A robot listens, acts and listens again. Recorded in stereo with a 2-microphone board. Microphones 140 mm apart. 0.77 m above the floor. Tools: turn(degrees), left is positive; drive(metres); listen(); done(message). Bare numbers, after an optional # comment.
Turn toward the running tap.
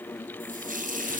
# The running tap: about 70° right or 110° right.
turn(-70)
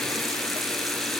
listen()
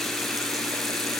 listen()
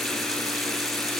done("I heard a running tap, but can't make it out now. It was about straight ahead or 40° right.")